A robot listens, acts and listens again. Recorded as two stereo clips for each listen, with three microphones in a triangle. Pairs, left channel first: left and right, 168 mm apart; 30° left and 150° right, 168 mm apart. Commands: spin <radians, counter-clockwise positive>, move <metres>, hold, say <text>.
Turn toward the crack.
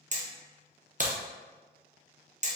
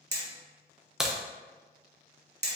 spin -1.13
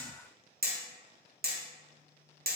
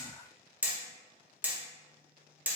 say Facing where the crack came from. I can't hear it now.